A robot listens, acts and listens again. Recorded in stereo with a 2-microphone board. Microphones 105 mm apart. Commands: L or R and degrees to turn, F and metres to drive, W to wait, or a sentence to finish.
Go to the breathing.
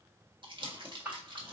R20
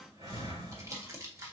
R140
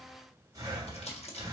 R35
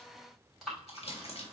F1.0
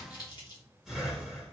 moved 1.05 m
F1.0
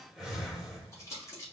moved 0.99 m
F1.0
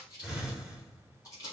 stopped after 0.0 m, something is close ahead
R10
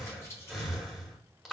Arrived at the breathing, straight ahead.